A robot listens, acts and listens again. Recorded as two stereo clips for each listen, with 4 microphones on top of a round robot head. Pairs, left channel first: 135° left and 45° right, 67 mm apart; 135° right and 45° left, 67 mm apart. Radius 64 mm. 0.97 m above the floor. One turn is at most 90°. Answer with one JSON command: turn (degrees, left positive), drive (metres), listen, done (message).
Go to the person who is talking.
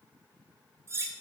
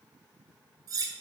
{"listen": true}
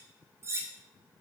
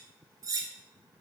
{"listen": true}
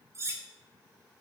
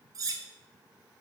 {"done": "I can't make out anyone speaking, only cutlery clinking."}